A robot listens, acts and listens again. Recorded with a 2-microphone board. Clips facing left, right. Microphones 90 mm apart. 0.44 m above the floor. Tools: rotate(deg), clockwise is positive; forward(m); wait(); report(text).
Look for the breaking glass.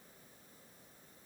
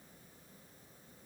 wait()
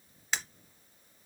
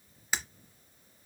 rotate(30)
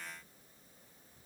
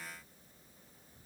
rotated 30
wait()
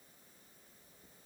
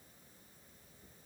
report("I heard breaking glass, but can't make it out now. It was about 25° left or 145° right.")